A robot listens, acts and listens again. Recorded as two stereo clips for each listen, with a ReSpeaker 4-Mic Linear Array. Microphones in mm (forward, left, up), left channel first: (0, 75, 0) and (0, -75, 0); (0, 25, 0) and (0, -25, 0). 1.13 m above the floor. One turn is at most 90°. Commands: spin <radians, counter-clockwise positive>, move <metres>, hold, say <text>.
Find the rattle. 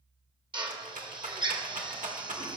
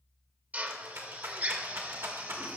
spin -1.05
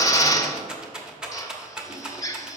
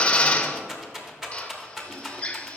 say Facing the rattle, 1 to 2 m away.